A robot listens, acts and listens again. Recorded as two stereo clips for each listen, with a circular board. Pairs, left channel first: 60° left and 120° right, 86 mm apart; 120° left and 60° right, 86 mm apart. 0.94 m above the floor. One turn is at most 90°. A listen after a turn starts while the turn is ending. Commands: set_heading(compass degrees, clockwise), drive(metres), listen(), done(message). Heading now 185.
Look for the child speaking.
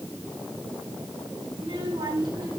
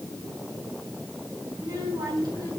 set_heading(275)
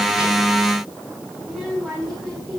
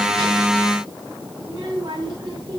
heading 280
set_heading(310)
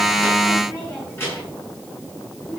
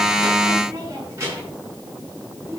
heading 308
done("Facing the child speaking.")